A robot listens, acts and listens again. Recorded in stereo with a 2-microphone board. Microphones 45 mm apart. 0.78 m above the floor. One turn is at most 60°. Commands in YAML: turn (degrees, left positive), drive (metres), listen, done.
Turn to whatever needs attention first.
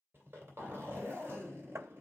listen: true
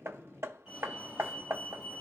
turn: -30
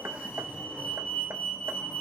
turn: 15
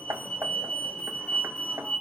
done: "Found it: a fire alarm, straight ahead, 2 to 4 m away."